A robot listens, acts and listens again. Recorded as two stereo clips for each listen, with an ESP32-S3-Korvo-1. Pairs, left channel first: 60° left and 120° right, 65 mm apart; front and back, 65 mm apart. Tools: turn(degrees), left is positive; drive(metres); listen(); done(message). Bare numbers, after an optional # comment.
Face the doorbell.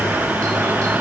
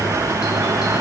listen()
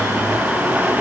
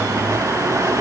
listen()
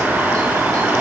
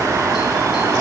done("I can't make out a doorbell.")